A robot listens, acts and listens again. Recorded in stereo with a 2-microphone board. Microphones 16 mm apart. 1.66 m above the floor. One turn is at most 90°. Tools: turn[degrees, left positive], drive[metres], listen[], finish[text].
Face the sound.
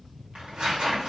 Action: turn[-90]
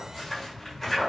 Thought: So it is at 10° left.
Action: turn[10]
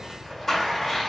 Action: finish[Facing the tearing paper, 1 to 2 m away.]